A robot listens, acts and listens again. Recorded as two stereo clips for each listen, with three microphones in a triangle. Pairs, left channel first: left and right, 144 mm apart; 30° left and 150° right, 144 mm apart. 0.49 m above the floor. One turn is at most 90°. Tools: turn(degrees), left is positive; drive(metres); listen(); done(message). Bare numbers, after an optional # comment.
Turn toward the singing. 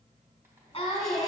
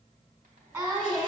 # The singing: 150° left.
turn(90)
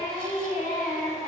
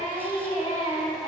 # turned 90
# The singing is now 85° left.
turn(85)
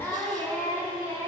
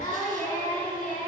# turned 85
# The singing is now 25° left.
turn(25)
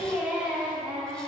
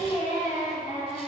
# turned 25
done("Found it: singing, straight ahead.")